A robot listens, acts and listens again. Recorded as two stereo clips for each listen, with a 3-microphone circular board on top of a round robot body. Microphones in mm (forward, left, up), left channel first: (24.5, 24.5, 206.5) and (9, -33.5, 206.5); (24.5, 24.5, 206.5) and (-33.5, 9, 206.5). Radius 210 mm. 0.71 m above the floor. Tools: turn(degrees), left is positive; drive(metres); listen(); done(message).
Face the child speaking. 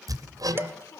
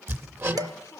turn(degrees=55)
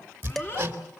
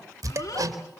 listen()
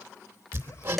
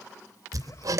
listen()
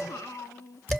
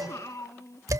turn(degrees=50)
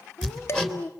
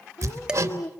turn(degrees=35)
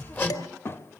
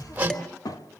turn(degrees=25)
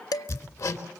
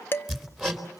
done("Facing the child speaking.")